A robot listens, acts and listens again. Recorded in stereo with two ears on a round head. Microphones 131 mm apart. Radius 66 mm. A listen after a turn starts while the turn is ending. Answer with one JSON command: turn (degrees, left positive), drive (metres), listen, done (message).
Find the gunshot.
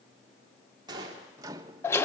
{"turn": -25}
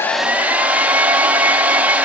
{"listen": true}
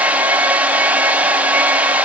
{"done": "I heard a gunshot, but can't make it out now. It was about straight ahead or 130° right."}